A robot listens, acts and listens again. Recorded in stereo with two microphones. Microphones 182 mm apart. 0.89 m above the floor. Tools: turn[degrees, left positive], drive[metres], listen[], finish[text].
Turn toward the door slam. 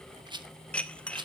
Action: listen[]
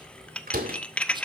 Thought: The door slam: about 55° right or 125° right.
Action: turn[-55]
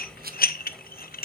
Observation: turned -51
Action: listen[]
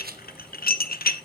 Action: finish[I heard a door slam, but can't make it out now. It was about straight ahead or 75° right.]